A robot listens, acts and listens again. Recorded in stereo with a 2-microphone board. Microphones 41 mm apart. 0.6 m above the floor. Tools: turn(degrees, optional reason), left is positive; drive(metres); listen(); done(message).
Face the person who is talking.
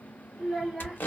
turn(degrees=-30)
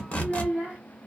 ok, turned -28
turn(degrees=-135, reason="So it is at 135° right.")
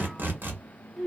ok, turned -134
done("Facing the child speaking.")